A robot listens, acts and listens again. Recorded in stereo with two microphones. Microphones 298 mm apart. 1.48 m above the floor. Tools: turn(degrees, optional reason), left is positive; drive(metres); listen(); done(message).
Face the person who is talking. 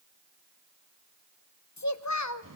turn(degrees=60, reason="The child speaking: about 60° left or 120° left.")
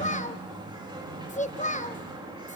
turn(degrees=25, reason="So it is at 25° left.")
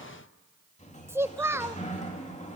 turn(degrees=-10, reason="The child speaking is now 10° right.")
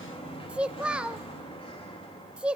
done("Found it: a child speaking, straight ahead.")